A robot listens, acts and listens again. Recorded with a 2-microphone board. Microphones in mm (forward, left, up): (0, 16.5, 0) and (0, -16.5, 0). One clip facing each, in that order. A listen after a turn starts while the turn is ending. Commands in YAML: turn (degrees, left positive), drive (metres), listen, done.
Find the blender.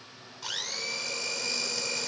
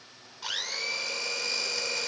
turn: -30
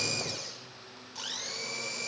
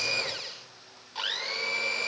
turn: -140
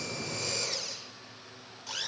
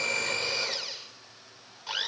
turn: -30
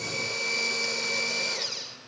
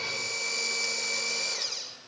turn: 10
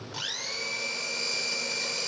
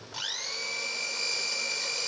done: "Facing the blender."